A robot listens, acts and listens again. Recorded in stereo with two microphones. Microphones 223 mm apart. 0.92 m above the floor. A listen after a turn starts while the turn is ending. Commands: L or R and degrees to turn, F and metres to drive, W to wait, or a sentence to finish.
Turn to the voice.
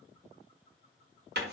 W
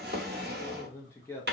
L30
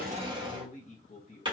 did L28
L140
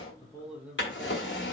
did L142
Found it: a man speaking, straight ahead.